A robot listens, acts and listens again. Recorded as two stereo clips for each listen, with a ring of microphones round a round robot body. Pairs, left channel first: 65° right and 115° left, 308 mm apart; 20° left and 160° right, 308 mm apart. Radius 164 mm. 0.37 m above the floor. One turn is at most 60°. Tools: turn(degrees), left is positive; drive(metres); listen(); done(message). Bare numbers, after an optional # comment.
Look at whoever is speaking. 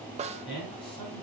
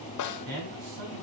# The man speaking: 140° right.
turn(-60)
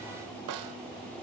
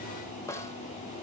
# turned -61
# Nothing new. It was at 80° right.
turn(-60)
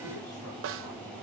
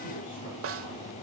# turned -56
# Nothing new. It was at 25° right.
turn(-25)
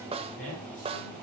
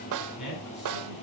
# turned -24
done("Found it: a man speaking, straight ahead.")